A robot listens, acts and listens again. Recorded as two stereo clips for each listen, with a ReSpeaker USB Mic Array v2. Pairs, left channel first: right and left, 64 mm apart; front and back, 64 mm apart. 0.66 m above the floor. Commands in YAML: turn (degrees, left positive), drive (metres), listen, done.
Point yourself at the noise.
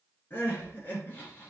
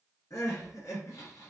turn: -35
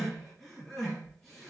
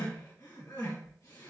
done: "Facing the crying."